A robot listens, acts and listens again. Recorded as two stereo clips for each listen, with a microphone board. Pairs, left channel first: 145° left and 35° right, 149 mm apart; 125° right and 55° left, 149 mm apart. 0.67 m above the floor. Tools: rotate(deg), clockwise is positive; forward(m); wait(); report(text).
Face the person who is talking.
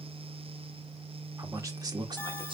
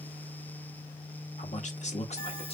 rotate(90)
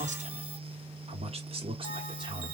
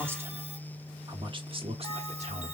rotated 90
rotate(-25)
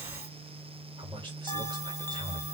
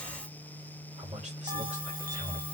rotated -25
rotate(-25)
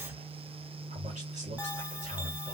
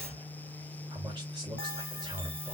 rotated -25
report("Found it: a man speaking, straight ahead.")